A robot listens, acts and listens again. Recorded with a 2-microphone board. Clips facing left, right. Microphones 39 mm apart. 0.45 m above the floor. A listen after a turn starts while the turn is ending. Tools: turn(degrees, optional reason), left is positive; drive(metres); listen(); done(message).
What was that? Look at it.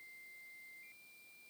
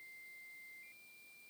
listen()
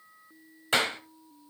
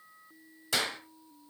turn(degrees=40, reason="The clap: about 40° left or 140° left.")
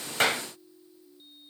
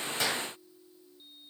listen()
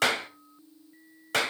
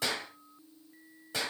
turn(degrees=100, reason="So it is at 100° left.")
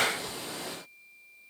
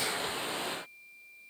listen()
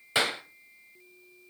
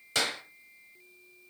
turn(degrees=20, reason="The clap is now 20° left.")
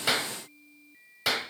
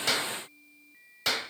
done("Facing the clap, 1 to 2 m away.")